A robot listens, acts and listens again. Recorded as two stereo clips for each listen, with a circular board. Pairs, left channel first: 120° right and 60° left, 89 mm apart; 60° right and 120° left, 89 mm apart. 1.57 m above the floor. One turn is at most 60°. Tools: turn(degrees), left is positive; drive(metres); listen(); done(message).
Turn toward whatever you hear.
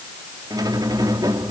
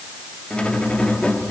turn(degrees=20)
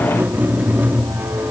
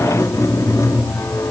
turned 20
done("Facing the squeak.")